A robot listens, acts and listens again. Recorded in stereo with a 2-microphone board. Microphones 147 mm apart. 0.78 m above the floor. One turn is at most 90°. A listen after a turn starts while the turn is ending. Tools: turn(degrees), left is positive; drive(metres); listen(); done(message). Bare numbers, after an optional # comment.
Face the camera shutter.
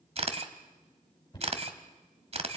# The camera shutter: about 45° right or 135° right.
turn(-45)
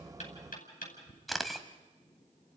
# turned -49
done("Facing the camera shutter, 1 to 2 m away.")